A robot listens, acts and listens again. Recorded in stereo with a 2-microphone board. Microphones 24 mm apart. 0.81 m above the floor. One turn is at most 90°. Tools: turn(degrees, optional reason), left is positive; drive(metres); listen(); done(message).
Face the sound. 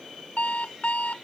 turn(degrees=90)
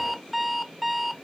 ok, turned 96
done("Facing the alarm clock.")